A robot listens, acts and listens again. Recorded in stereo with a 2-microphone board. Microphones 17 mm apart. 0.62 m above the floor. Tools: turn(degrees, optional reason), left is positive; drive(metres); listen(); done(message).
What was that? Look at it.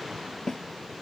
turn(degrees=40, reason="The snare drum: about 40° left or 140° left.")
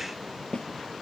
turn(degrees=95, reason="So it is at 95° left.")
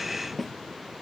done("Facing the snare drum.")